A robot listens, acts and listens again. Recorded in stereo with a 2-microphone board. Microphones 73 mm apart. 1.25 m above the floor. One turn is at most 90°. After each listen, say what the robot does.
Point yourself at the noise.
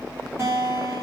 Turn 30° right.
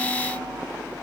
Keep listening.
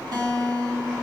Turn 90° right.
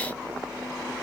Turn 25° right.
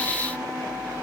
Keep listening.
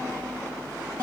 Turn 20° right.
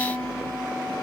Facing the guitar, 2 to 4 m away.